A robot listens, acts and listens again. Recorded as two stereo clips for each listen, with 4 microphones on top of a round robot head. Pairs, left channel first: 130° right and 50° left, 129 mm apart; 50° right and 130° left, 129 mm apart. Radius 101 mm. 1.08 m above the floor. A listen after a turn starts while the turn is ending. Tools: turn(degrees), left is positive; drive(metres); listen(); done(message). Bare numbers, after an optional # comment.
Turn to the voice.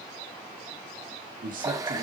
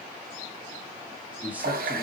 # The man speaking: 50° left.
turn(50)
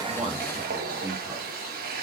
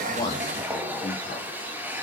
listen()
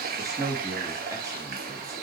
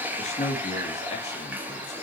# The man speaking is now 15° right.
turn(-15)
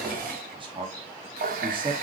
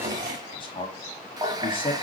done("Found it: a man speaking, straight ahead, 1 to 2 m away.")